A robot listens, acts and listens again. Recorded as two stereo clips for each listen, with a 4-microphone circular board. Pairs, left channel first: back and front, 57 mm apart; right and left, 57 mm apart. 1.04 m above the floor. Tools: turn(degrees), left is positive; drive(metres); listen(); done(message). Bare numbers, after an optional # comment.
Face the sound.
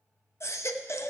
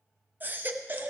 # The baby crying: 145° left.
turn(145)
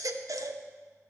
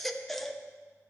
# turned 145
done("Found it: a baby crying, straight ahead, under 1 m away.")